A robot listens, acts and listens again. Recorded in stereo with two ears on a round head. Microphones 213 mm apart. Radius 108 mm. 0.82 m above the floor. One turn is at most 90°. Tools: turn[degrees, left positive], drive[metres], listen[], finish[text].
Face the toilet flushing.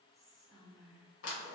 Action: listen[]
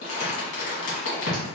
Action: listen[]
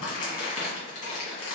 Action: finish[I can't make out a toilet flushing to turn to.]